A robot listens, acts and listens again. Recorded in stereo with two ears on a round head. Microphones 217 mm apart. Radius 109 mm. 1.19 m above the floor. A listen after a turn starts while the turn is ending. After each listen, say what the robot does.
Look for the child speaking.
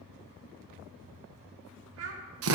Turn 65° right.
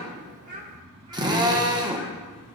Turn 30° right.
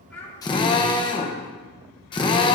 Keep listening.
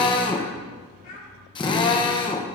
Turn 35° left.
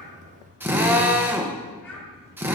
Keep listening.
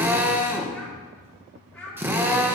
Facing the child speaking, 2 to 4 m away.